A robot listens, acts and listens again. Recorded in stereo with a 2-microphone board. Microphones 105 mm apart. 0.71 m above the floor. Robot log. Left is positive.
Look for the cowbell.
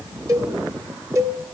note: The cowbell: about 30° right or 150° right.
cmd yaw -30
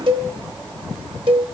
note: So it is at 125° right.
cmd yaw -125
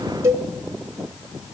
note: The cowbell is now 30° right.
cmd yaw -30
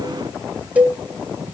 note: The cowbell is now 15° right.
cmd yaw -15
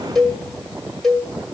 end: Facing the cowbell.